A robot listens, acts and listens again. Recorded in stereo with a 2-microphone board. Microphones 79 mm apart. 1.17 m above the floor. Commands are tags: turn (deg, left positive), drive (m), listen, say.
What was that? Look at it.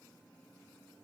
<listen/>
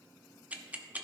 <turn deg="-20"/>
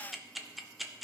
<say>Found it: ticking, straight ahead.</say>